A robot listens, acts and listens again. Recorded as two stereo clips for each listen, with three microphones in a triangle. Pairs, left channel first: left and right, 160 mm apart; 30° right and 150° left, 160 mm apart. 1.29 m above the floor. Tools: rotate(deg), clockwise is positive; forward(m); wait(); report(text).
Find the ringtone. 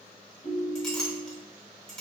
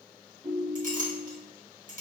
rotate(-90)
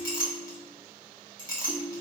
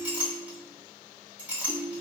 rotate(15)
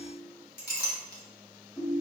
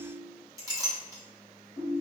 report("Found it: a ringtone, straight ahead.")